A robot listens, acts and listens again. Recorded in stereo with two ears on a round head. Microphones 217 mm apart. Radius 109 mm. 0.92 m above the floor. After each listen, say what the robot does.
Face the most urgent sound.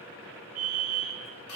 Turn 75° right.
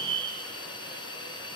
Turn 25° right.
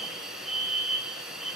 Facing the fire alarm, over 4 m away.